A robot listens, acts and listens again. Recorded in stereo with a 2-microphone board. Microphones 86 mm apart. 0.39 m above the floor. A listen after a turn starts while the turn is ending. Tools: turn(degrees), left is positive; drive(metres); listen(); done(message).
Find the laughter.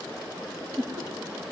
turn(degrees=-50)
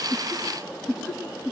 done("Facing the laughter, 2 to 4 m away.")